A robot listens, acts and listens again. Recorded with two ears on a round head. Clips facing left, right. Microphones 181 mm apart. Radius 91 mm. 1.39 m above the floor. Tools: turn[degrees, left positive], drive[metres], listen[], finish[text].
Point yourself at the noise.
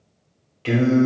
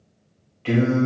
Thought: The singing: about 50° left or 130° left.
Action: turn[50]
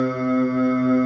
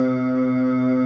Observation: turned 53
Thought: So it is at 10° left.
Action: turn[10]
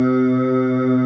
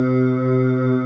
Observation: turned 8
Action: finish[Facing the singing, 1 to 2 m away.]